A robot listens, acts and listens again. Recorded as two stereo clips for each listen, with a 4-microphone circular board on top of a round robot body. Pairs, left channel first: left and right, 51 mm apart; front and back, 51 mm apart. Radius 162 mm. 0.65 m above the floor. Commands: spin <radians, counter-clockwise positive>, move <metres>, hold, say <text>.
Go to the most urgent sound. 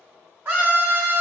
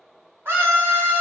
spin -2.36
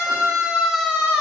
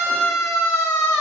move 1.0
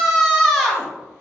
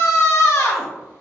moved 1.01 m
move 1.0
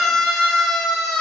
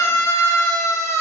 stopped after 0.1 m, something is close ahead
say I am next to the scream.